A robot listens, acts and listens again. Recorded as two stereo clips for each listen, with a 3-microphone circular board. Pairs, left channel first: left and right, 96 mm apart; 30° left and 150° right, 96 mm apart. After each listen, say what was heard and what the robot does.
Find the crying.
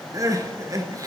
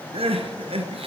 The crying: 145° right. Turn 145° right.
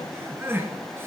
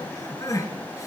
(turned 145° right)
The crying is now 25° right. Turn 25° right.
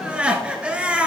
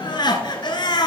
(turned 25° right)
The crying is now 10° right. Turn 10° right.
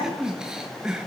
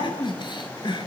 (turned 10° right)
Found it: crying, straight ahead.